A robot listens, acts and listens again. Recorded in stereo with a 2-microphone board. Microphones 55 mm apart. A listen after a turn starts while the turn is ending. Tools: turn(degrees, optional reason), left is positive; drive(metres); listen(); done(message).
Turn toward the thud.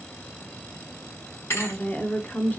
turn(degrees=55, reason="The thud: about 55° left or 125° left.")
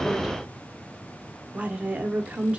listen()
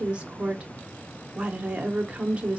done("I heard a thud, but can't make it out now. It was about straight ahead or 70° left.")